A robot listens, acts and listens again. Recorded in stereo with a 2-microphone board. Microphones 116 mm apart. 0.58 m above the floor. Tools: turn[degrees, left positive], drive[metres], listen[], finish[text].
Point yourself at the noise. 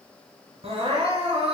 Thought: The crying: about 60° right or 120° right.
Action: turn[-60]
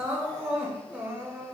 Thought: So it is at 15° right.
Action: turn[-15]
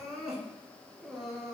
Action: finish[Facing the crying.]